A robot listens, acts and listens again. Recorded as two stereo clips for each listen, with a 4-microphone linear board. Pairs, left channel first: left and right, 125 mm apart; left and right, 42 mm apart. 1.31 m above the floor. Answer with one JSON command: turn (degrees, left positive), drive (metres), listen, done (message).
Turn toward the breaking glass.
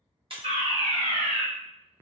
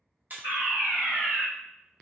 {"turn": -45}
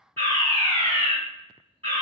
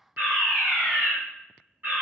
{"listen": true}
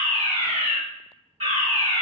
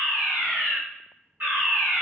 {"done": "I heard breaking glass, but can't make it out now. It was about straight ahead or 90° right."}